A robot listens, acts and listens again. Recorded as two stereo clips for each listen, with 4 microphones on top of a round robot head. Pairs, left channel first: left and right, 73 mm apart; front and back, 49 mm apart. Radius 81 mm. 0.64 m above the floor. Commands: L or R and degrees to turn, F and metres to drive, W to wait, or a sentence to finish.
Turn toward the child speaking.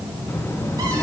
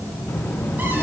L40
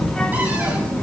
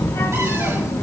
L20
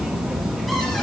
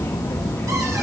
Found it: a child speaking, straight ahead.